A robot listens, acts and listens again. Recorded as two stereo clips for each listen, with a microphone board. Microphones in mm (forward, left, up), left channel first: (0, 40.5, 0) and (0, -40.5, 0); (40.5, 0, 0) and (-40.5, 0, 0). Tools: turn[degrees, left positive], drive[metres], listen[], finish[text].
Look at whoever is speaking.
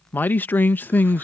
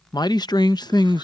Thought: The man speaking: 25° left.
Action: turn[25]
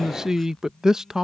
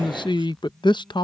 Action: finish[Facing the man speaking.]